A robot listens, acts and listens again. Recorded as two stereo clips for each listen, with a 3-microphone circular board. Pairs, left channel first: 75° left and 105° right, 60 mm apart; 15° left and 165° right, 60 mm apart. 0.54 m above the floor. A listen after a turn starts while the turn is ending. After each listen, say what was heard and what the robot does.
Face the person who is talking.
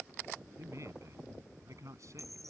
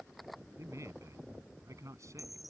The man speaking: 135° right. Turn 135° right.
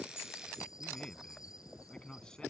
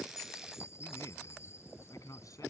Facing the man speaking.